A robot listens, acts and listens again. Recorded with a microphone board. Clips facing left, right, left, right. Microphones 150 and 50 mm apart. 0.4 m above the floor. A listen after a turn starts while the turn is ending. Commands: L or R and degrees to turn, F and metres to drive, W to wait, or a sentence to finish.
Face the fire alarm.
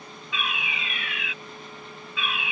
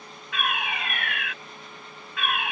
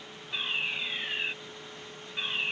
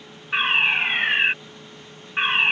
R60
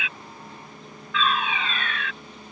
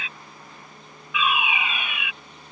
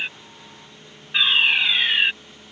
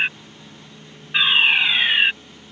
R15
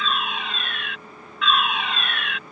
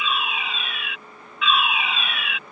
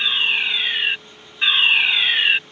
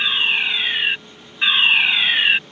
Found it: a fire alarm, straight ahead.